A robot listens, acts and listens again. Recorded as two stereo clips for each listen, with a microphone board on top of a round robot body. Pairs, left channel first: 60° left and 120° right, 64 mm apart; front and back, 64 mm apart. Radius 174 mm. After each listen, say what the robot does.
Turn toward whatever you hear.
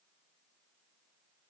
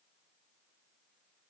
Keep listening.
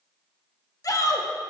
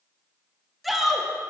Turn 90° left.
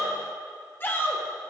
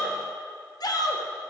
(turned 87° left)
Facing the shout.